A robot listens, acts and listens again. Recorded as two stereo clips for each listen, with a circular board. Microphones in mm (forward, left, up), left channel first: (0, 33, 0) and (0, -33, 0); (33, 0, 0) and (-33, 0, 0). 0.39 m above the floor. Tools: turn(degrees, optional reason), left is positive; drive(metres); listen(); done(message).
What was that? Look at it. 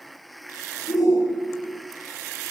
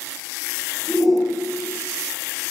turn(degrees=90, reason="The shout: 90° left.")
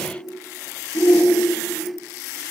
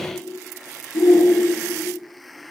turn(degrees=30, reason="The shout is now 30° left.")
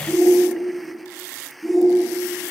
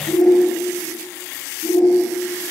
done("Facing the shout.")